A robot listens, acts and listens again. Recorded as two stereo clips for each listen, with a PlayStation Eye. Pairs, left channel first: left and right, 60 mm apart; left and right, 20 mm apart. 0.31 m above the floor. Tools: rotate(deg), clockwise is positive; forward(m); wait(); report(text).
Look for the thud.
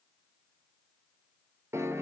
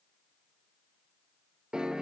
wait()
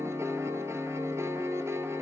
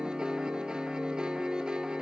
wait()
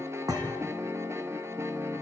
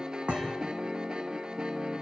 rotate(90)
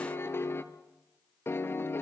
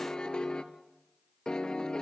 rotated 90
report("I heard a thud from this way, but can't make it out now.")